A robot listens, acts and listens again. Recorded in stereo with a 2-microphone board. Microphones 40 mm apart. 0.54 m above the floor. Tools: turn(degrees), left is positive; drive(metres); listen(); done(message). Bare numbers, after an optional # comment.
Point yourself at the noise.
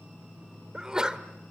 # The sneeze: about 20° right or 160° right.
turn(-20)
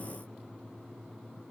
listen()
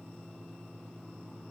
done("I heard a sneeze, but can't make it out now. It was about straight ahead or 140° right.")